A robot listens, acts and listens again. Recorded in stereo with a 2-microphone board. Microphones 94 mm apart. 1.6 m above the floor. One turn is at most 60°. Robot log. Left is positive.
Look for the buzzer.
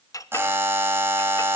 note: The buzzer: about 25° right or 155° right.
cmd yaw -25
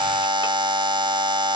note: So it is at 125° right.
cmd yaw -60
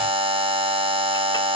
note: The buzzer is now 80° right.
cmd yaw -60
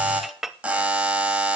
note: The buzzer is now 15° right.
cmd yaw -15
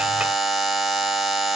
end: Found it: a buzzer, straight ahead, 2 to 4 m away.